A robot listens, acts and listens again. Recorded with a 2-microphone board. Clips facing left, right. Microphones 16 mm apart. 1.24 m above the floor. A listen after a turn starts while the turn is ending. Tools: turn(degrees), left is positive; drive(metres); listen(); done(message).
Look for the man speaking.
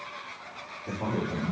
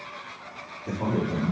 turn(degrees=-40)
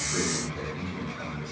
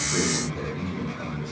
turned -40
turn(degrees=-15)
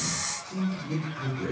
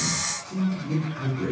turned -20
turn(degrees=-10)
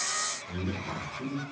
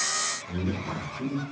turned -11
done("Found it: a man speaking, straight ahead, 2 to 4 m away.")